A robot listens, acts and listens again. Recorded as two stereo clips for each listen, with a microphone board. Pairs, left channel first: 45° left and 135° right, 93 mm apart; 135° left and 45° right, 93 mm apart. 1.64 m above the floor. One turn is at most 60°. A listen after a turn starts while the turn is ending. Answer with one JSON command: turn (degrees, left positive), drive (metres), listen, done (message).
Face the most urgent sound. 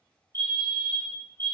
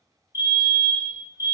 {"turn": 60}
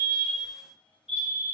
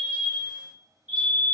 {"turn": 30}
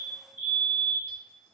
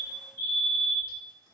{"done": "Found it: a fire alarm, straight ahead, 1 to 2 m away."}